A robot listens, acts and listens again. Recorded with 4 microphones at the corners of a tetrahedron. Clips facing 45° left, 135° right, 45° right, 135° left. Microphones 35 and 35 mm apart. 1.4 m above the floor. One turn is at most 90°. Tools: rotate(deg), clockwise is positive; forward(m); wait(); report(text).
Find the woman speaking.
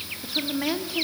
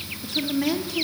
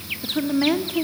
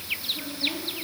rotate(35)
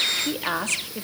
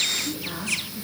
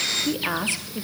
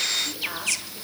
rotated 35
rotate(-15)
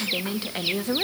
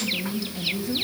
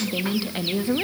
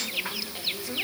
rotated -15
rotate(-10)
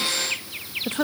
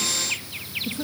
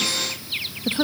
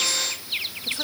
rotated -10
rotate(-15)
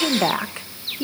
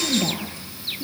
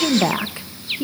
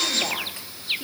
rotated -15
rotate(-20)
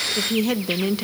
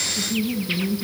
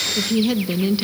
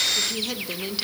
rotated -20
rotate(-30)
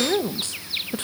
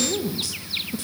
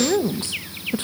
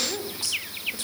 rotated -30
report("Facing the woman speaking.")